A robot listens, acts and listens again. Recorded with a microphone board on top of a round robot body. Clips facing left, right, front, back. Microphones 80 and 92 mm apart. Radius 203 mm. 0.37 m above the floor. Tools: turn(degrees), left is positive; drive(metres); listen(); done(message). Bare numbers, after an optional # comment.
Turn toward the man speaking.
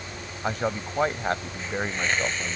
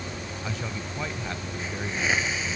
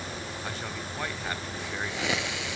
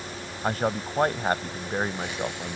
# The man speaking: 130° left.
turn(130)
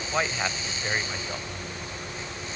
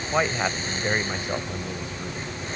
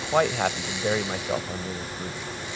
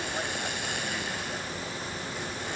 # The man speaking is now 15° right.
turn(-15)
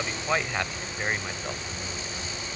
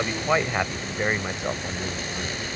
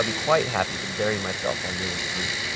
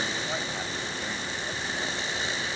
# The man speaking is now 20° right.
turn(-20)
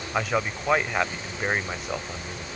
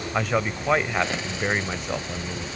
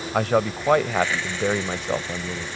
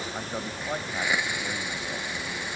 done("Found it: a man speaking, straight ahead.")